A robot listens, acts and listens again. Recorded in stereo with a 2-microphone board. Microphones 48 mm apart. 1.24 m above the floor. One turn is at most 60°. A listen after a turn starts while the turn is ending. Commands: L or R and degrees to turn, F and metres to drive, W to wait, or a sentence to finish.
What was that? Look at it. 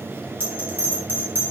R45
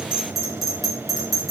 Facing the bell.